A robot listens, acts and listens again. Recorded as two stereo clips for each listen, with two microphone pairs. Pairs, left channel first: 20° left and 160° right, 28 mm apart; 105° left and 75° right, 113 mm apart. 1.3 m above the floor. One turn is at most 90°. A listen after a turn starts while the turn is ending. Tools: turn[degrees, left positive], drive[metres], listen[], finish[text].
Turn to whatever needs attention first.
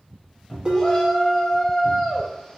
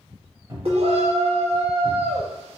Thought: The shout: 50° right.
Action: turn[-50]
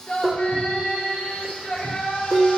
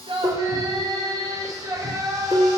Thought: The shout is now 15° right.
Action: turn[-15]
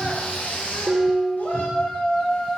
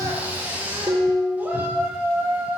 Action: finish[Facing the shout.]